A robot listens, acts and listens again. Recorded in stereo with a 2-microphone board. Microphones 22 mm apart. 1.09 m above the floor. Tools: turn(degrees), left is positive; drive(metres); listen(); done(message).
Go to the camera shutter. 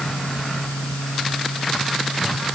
listen()
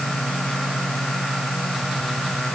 listen()
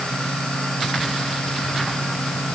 done("I can't make out a camera shutter to turn to.")